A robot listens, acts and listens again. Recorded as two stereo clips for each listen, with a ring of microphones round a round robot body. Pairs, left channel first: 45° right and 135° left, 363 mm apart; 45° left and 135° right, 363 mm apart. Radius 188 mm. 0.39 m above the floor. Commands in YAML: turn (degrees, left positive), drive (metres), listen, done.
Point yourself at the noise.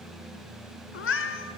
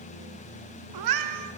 turn: -100
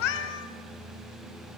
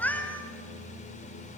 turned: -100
turn: -40
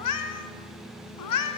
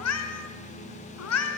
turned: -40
done: "Facing the cat meowing."